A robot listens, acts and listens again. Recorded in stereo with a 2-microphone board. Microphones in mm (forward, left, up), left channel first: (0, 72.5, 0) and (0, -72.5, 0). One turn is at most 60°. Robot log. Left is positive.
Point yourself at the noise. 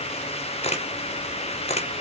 note: The camera shutter: about 45° left or 135° left.
cmd yaw +45
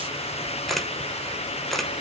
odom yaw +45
end: Found it: a camera shutter, straight ahead, under 1 m away.